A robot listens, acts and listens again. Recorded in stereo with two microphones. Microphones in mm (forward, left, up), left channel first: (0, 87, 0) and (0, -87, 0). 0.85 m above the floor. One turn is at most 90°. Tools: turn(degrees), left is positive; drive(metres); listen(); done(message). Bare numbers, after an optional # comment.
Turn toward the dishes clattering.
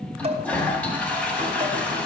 # The dishes clattering: about 35° right or 145° right.
turn(-35)
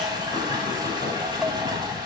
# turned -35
done("Facing the dishes clattering, 1 to 2 m away.")